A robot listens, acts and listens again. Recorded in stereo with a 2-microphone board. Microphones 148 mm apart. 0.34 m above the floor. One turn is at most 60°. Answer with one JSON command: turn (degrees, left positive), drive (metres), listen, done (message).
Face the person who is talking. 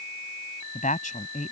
{"turn": 60}
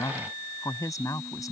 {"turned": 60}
{"turn": 25}
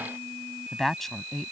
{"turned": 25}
{"done": "Facing the woman speaking."}